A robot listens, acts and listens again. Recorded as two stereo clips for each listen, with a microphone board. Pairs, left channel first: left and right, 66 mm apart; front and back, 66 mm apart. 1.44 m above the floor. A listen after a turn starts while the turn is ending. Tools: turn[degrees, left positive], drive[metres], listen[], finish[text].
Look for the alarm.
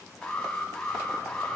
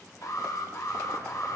Thought: The alarm: 15° left.
Action: turn[15]
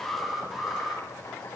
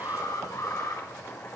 Action: finish[Found it: an alarm, straight ahead, 2 to 4 m away.]